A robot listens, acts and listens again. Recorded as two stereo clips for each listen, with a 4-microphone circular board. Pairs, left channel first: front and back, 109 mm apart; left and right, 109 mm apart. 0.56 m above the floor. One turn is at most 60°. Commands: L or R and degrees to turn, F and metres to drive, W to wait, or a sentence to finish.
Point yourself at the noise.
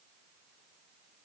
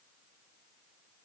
W
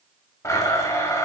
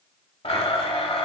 L60
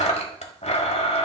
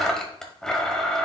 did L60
Found it: a blender, straight ahead, 1 to 2 m away.